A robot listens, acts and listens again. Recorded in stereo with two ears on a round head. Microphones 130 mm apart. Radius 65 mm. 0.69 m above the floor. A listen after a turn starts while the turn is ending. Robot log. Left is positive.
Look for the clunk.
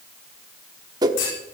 note: The clunk: about 65° left or 115° left.
cmd yaw +65
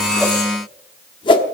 cmd idle
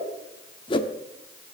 end: I heard a clunk, but can't make it out now. It was about straight ahead or 50° left.